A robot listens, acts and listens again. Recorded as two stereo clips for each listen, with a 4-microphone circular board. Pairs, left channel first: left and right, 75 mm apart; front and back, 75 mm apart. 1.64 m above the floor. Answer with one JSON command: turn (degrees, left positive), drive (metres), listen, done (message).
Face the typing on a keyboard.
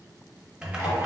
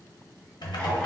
{"turn": -10}
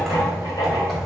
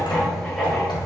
{"done": "Facing the typing on a keyboard."}